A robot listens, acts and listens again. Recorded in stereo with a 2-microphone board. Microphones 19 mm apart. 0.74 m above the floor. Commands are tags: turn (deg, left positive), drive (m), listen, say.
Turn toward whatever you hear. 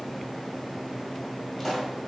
<turn deg="30"/>
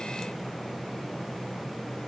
<listen/>
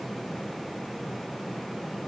<say>I heard a pop, but can't make it out now. It was about 20° right or 140° left.</say>